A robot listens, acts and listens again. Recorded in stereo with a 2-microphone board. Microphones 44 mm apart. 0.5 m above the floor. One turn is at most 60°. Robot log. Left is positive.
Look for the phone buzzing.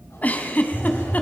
cmd yaw +30
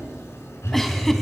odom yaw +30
note: So it is at 140° left.
cmd yaw +60
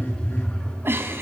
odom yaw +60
note: The phone buzzing is now 80° left.
cmd yaw +60
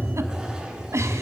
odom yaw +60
note: The phone buzzing is now 40° left.
cmd yaw +40
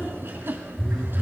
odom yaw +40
note: The phone buzzing is now 10° left.
cmd yaw +10
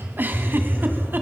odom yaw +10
end: Found it: a phone buzzing, straight ahead.